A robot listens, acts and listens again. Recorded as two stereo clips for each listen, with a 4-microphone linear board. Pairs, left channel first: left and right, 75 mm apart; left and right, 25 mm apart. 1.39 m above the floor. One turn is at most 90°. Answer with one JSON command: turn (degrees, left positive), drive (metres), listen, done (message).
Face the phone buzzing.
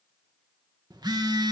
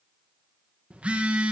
{"turn": -65}
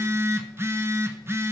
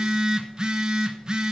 {"turn": -35}
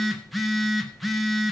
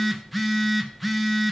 {"done": "Facing the phone buzzing, under 1 m away."}